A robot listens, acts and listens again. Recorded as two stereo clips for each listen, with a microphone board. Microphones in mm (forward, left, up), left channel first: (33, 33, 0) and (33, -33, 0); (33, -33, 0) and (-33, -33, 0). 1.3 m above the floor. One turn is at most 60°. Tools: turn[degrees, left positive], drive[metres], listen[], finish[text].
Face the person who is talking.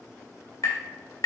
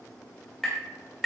Action: listen[]
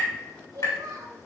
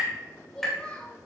Thought: The child speaking: 70° right.
Action: turn[-60]
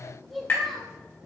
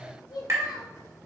Action: finish[Found it: a child speaking, straight ahead, 1 to 2 m away.]